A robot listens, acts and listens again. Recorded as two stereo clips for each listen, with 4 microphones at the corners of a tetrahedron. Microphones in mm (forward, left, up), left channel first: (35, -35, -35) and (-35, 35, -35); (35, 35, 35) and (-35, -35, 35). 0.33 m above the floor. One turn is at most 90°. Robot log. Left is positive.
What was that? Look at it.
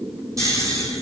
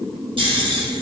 note: The snoring: 170° right.
cmd yaw -90
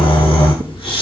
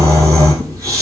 note: The snoring is now 75° right.
cmd yaw -75
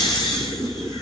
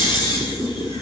end: Found it: snoring, straight ahead.